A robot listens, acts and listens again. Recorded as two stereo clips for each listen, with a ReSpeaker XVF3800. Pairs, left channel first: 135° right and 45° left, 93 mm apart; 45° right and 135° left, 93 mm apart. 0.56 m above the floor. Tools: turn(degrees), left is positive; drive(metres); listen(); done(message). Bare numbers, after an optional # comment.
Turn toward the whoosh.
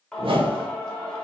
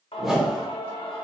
# The whoosh: 50° left.
turn(50)
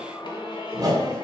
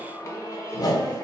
done("Facing the whoosh, under 1 m away.")